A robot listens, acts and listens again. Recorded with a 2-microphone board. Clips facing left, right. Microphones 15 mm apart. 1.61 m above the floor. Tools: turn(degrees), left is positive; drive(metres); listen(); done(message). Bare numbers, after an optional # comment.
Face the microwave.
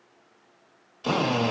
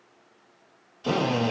listen()
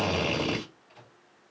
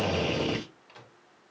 turn(-90)
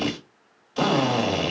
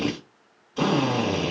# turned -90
listen()
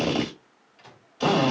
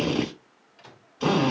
done("Found it: a microwave, straight ahead.")